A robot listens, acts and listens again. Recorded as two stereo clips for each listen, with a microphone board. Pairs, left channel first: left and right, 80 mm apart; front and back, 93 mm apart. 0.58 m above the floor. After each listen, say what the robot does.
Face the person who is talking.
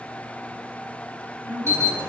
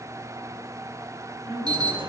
Turn 155° left.
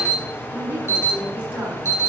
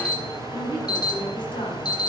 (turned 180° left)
Turn 25° right.
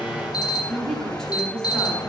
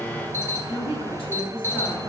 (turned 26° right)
Facing the woman speaking.